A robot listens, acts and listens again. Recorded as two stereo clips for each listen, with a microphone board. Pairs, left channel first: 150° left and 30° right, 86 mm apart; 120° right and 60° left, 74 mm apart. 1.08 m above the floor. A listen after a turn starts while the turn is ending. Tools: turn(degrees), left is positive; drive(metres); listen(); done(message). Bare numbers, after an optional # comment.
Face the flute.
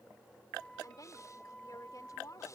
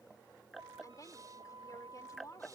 # The flute: 70° left.
turn(70)
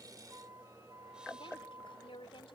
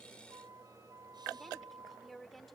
# The flute is now 20° left.
turn(20)
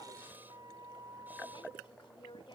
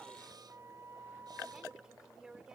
# The flute is now 10° left.
turn(10)
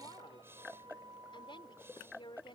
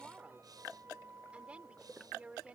done("Facing the flute.")